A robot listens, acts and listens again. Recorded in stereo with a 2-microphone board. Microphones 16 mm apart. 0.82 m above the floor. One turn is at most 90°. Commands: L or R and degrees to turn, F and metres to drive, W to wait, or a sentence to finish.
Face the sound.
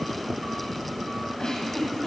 L45
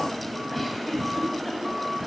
Facing the giggle.